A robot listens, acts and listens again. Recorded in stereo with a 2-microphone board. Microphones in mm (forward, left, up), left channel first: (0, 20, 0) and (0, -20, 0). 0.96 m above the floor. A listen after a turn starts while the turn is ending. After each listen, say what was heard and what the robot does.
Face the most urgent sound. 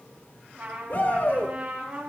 The shout: about 50° left or 130° left. Turn 50° left.
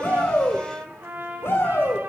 So it is at 80° left. Turn 80° left.
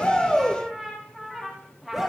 Facing the shout.